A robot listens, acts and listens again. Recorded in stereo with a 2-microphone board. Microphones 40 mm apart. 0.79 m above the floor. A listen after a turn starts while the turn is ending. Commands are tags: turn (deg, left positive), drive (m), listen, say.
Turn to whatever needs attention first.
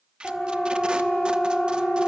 <turn deg="20"/>
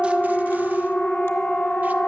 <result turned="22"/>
<turn deg="135"/>
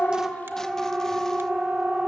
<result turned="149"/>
<turn deg="-10"/>
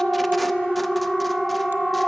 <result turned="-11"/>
<say>Facing the siren, 2 to 4 m away.</say>